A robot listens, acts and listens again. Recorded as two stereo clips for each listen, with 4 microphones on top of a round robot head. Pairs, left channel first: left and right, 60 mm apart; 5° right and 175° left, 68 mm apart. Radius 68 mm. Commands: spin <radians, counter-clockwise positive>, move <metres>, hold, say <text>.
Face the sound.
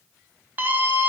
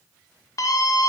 spin -0.61
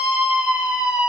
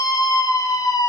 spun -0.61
spin -0.26
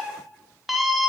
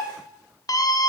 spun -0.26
say Found it: a scream, straight ahead, 1 to 2 m away.